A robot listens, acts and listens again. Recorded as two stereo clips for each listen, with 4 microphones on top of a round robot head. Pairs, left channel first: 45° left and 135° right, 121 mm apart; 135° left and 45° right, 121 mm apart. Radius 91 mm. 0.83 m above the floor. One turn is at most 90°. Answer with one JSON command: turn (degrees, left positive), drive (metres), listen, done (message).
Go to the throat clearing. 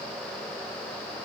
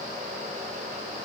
{"listen": true}
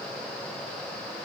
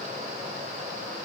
{"listen": true}
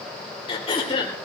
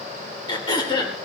{"turn": 85}
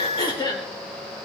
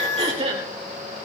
{"turn": -10}
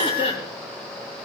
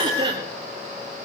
{"drive": 1.0}
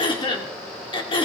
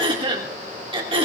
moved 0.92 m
{"drive": 1.0}
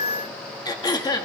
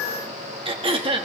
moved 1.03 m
{"turn": -10}
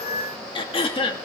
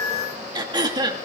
{"drive": 1.0}
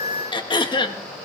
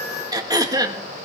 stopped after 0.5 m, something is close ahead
{"done": "I am next to the throat clearing."}